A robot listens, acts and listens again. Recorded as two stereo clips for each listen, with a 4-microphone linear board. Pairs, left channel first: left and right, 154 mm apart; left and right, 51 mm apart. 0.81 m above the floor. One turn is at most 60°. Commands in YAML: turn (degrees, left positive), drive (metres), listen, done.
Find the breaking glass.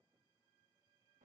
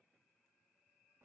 listen: true
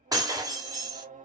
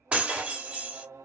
turn: -25
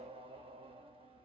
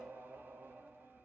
listen: true
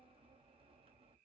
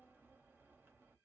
done: "I heard breaking glass, but can't make it out now. It was about straight ahead or 130° right."